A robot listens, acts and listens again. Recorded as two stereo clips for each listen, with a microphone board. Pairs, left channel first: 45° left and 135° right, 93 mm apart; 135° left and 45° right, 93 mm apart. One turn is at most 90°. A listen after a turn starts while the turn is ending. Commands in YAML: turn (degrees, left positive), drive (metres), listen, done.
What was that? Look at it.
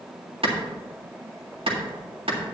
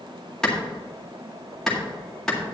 turn: -90
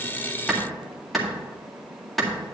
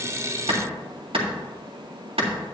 turn: -45
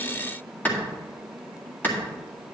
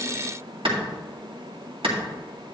turn: -25
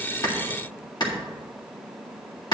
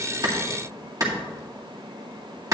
done: "Found it: a clap, straight ahead."